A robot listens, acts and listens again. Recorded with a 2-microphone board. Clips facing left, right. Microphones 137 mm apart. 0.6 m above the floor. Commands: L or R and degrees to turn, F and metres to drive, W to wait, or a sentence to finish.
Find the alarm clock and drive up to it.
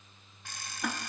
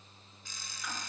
L65
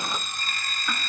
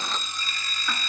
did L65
L50
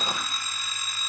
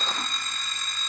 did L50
F1.0
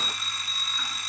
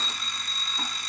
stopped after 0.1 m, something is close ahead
Blocked. The alarm clock is further on, straight ahead.